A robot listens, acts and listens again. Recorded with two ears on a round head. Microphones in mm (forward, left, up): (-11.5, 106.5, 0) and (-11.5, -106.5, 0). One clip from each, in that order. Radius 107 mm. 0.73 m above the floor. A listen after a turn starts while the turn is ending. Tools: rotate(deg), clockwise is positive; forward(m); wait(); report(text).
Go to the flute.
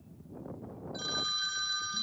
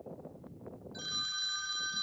wait()
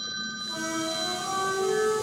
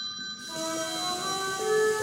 rotate(55)
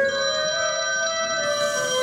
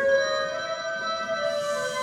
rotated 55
forward(1.0)
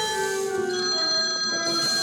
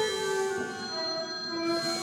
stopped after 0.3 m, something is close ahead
report("Blocked. The flute is further on, straight ahead.")